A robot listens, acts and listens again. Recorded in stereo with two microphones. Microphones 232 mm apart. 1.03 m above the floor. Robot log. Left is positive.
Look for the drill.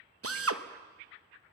cmd yaw -90
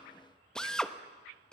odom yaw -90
end: Found it: a drill, straight ahead, under 1 m away.